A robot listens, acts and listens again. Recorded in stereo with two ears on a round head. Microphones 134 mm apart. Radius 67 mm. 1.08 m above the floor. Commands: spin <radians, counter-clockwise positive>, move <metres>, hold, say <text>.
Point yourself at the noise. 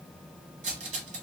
spin -0.87
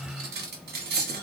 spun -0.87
spin -1.31
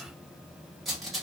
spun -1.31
say Found it: cutlery clinking, straight ahead, under 1 m away.